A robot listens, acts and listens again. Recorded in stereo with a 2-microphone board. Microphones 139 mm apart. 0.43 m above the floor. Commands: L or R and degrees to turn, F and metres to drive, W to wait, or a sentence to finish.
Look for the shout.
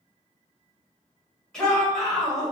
L30
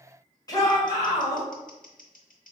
L145
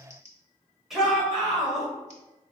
Found it: a shout, straight ahead, 1 to 2 m away.